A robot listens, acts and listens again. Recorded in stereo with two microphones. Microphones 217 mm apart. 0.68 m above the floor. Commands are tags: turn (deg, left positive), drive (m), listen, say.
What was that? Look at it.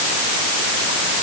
<listen/>
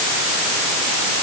<listen/>
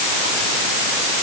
<say>I can't make out anything to turn to.</say>